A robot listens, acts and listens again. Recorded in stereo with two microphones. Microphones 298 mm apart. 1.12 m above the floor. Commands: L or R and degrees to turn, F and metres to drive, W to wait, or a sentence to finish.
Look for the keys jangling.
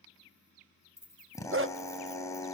L55
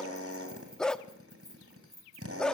L85
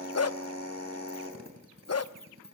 W
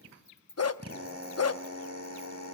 L35
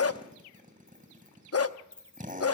Facing the keys jangling, 2 to 4 m away.